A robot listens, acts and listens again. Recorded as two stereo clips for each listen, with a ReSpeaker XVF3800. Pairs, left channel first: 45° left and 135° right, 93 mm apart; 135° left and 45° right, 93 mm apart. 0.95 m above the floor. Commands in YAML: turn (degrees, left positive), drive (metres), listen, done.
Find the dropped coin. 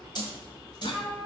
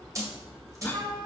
turn: 10
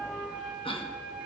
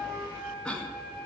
done: "I heard a dropped coin from this way, but can't make it out now."